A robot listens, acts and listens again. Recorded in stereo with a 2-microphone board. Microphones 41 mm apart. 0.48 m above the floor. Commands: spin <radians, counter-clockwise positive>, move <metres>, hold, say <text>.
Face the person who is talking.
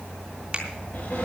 hold
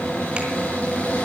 hold
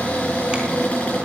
say I can't make out anyone speaking to turn to.